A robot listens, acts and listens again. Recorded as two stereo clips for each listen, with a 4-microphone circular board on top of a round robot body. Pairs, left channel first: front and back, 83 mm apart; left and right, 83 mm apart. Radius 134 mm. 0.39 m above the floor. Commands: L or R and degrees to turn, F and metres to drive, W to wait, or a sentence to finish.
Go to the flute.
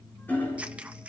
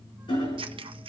W
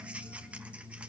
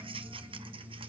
W
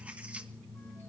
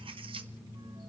I can't make out a flute to turn to.